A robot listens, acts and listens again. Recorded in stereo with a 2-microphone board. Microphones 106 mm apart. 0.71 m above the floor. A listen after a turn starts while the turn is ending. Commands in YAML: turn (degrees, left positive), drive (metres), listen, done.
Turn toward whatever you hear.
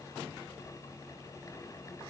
listen: true
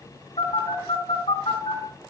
turn: 75
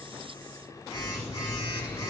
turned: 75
turn: 30
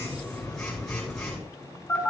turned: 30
turn: 10
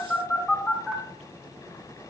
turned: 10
done: "Found it: a phone buzzing, straight ahead, over 4 m away."